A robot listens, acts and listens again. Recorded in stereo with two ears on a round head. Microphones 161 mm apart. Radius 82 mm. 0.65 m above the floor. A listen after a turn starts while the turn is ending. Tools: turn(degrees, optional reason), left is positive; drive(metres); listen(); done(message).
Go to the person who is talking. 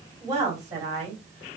turn(degrees=-20, reason="The woman speaking: about 20° right or 160° right.")
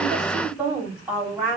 drive(metres=1.0)
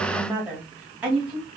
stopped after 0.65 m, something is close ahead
turn(degrees=-10, reason="The woman speaking is now 10° right.")
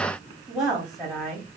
done("I am next to the woman speaking.")